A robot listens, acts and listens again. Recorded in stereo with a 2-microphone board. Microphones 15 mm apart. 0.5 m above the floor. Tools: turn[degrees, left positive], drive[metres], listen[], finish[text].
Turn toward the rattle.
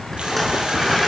Action: turn[30]
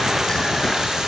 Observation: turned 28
Action: listen[]
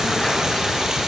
Thought: So it is at 150° left.
Action: turn[150]
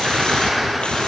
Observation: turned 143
Action: finish[Facing the rattle, over 4 m away.]